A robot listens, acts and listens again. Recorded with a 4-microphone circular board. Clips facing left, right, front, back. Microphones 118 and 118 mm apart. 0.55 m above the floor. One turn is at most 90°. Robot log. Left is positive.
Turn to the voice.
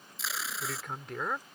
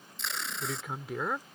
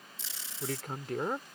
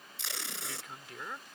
end: Found it: a man speaking, straight ahead.